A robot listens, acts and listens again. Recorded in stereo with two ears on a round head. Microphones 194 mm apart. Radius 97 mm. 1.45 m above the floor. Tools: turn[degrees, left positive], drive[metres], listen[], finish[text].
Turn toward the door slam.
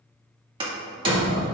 Thought: The door slam: about 25° right or 155° right.
Action: turn[-25]
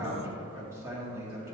Action: listen[]
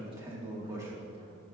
Action: finish[I heard a door slam, but can't make it out now. It was about straight ahead or 130° right.]